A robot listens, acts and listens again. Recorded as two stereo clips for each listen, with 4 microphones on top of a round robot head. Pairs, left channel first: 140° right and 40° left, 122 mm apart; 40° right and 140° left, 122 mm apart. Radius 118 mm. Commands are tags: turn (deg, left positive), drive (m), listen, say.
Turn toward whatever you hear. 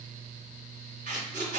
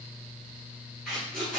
<turn deg="50"/>
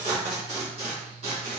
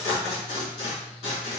<say>Facing the tape being pulled, 1 to 2 m away.</say>